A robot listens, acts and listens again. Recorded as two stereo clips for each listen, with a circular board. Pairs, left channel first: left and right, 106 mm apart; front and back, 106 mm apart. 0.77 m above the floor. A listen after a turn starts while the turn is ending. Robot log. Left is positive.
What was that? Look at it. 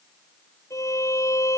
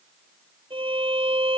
note: The violin: 150° left.
cmd yaw +150
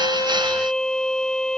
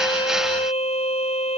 end: Facing the violin.